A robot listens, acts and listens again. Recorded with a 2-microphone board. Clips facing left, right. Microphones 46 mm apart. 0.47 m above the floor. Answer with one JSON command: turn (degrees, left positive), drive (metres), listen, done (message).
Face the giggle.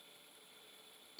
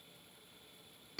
{"listen": true}
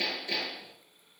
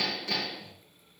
{"listen": true}
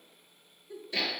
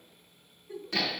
{"turn": -55}
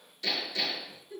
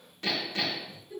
{"turn": -10}
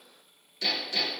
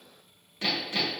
{"listen": true}
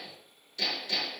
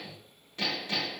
{"listen": true}
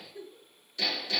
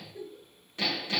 {"done": "Found it: a giggle, straight ahead, 1 to 2 m away."}